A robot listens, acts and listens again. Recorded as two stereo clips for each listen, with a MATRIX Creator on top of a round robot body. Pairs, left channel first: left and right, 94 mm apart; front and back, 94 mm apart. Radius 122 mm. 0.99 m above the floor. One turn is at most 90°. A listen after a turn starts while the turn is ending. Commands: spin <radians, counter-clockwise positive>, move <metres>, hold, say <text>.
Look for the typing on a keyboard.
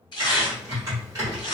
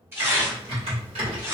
spin -1.57
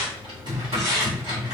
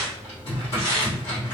spin -0.79
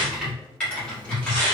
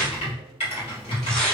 spin 0.17
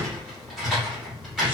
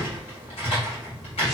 say Facing the typing on a keyboard.